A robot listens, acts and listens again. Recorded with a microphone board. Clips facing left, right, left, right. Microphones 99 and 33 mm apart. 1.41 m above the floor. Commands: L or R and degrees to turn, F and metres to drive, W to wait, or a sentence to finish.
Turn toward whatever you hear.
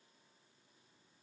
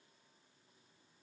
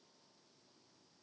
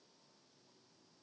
W
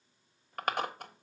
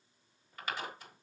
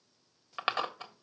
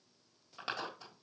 L55
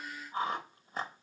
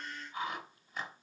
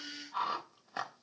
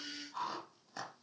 L45
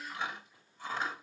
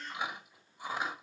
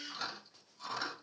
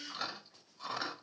R15
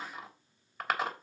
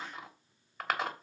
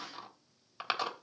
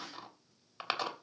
Found it: chewing, straight ahead.